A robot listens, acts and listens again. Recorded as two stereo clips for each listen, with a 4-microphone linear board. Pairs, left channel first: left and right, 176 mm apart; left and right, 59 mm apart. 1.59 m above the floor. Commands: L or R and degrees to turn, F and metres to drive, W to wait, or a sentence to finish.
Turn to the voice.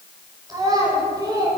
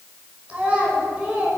R20
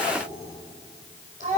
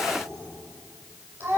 R135
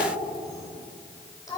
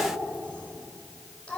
L20
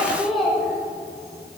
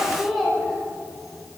Found it: a child speaking, straight ahead, over 4 m away.